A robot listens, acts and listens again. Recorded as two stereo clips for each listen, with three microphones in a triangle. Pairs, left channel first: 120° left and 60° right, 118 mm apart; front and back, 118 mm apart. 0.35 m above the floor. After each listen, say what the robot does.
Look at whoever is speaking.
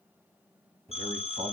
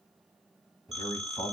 Turn 55° right.
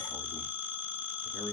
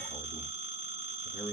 Keep listening.
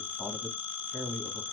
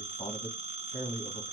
Turn 20° left.
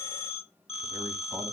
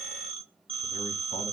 Keep listening.
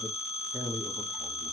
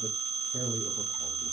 Found it: a man speaking, straight ahead.